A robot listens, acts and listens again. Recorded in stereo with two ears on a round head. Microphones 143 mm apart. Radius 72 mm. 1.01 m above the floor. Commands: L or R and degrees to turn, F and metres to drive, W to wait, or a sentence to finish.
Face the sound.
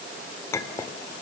L20
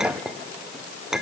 Found it: a clink, straight ahead, 2 to 4 m away.